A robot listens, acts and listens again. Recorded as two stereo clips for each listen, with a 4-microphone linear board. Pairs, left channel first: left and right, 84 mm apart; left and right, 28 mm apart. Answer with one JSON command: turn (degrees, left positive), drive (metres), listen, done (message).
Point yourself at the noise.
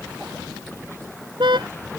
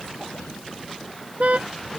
{"turn": -65}
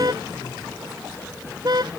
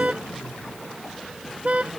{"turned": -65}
{"turn": -50}
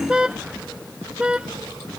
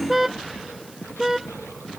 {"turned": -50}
{"turn": -10}
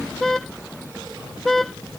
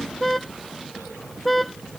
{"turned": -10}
{"done": "Facing the car horn."}